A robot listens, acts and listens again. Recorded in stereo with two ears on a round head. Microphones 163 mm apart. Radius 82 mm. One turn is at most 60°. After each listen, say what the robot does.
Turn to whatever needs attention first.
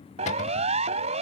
Turn 35° right.
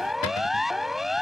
Found it: a siren, straight ahead.